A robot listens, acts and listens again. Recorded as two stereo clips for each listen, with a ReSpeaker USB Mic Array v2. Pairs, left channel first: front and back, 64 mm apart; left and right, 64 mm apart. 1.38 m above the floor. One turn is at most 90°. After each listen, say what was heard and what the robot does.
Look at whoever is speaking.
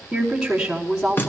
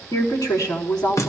The woman speaking: 95° left. Turn 90° left.
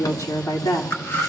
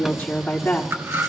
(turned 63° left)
The woman speaking is now 25° left. Turn 25° left.
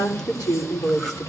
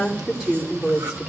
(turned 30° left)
The woman speaking is now 15° right. Turn 15° right.
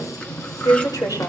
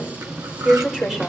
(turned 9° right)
The woman speaking is now 10° right. Turn 10° right.
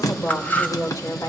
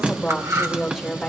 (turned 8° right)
Facing the woman speaking, over 4 m away.